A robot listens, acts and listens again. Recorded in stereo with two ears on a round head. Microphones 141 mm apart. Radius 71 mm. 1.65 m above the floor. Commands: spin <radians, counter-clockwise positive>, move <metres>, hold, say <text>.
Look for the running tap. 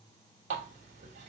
spin -0.79
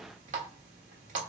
spin -1.31
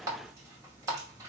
spin -0.44
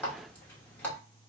spin 0.17
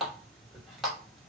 say Facing the running tap.